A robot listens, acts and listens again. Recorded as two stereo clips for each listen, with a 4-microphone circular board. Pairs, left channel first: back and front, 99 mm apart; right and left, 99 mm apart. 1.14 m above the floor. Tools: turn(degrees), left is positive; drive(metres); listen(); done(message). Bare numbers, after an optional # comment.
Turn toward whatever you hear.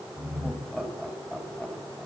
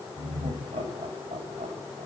# The laughter: 100° left.
turn(100)
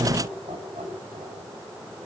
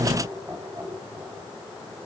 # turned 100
# The laughter is now 25° left.
turn(25)
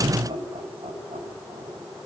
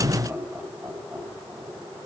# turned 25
# The laughter is now 25° left.
turn(25)
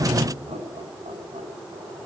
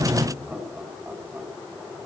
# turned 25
# The laughter is now 15° left.
turn(15)
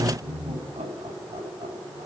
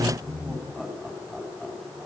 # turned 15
done("Found it: laughter, straight ahead, over 4 m away.")